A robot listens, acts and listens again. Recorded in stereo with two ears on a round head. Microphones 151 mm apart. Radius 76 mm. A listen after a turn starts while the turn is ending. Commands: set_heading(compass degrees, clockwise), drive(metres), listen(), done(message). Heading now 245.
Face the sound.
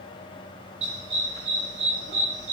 set_heading(290)
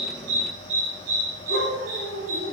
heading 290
set_heading(25)
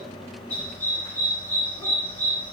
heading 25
set_heading(15)
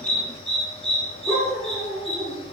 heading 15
done("Facing the dog barking.")